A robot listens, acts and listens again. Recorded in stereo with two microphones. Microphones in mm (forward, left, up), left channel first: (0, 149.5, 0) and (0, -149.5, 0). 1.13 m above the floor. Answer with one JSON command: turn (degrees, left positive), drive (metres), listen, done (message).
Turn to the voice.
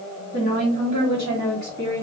{"turn": -75}
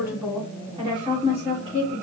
{"turn": -25}
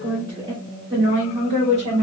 {"turn": -25}
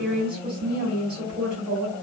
{"done": "Facing the woman speaking."}